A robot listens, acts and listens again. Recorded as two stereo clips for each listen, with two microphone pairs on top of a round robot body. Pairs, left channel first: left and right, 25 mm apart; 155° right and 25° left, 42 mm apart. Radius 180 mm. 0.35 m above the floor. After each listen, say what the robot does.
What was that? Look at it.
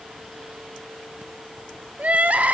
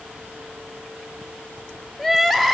Turn 70° right.
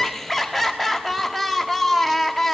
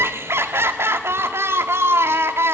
Facing the crying.